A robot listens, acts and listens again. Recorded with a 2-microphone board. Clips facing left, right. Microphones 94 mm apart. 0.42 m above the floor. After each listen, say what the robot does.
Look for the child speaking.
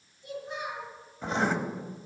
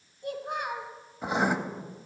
Turn 60° right.
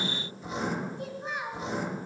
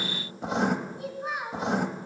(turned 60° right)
Facing the child speaking.